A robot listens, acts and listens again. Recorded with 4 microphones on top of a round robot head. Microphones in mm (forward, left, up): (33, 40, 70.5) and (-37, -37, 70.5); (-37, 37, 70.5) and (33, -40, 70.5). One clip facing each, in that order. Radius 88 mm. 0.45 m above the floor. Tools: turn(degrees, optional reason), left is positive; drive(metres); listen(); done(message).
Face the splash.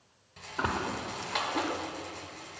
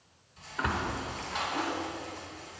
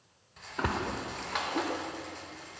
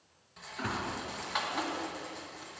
turn(degrees=110, reason="The splash: 110° left.")
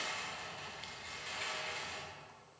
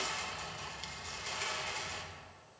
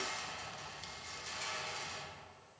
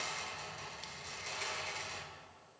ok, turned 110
done("I heard a splash from this way, but can't make it out now.")